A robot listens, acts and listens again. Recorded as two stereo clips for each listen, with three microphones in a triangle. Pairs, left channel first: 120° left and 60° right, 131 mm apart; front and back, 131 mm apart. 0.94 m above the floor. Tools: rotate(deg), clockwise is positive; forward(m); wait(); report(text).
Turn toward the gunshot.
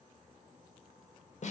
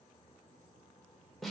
wait()
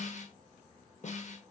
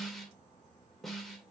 wait()
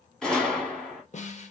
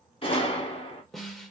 rotate(-35)
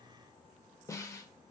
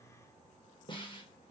report("Facing where the gunshot came from. I can't hear it now.")